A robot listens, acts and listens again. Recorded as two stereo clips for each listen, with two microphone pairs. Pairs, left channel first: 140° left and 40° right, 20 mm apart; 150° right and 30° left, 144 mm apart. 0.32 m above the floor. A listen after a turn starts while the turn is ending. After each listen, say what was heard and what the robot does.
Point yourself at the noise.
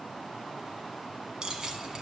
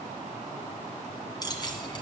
The keys jangling: 95° right. Turn 95° right.
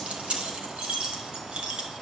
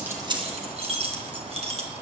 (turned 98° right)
The keys jangling is now 15° right. Turn 15° right.
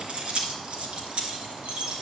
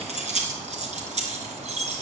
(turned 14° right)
Facing the keys jangling.